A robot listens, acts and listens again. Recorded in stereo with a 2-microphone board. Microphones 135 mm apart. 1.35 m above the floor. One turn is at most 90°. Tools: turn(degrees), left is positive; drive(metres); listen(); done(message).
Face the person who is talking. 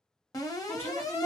turn(degrees=30)
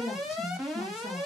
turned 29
turn(degrees=90)
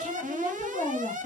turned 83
turn(degrees=55)
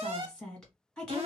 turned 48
done("Found it: a woman speaking, straight ahead, 1 to 2 m away.")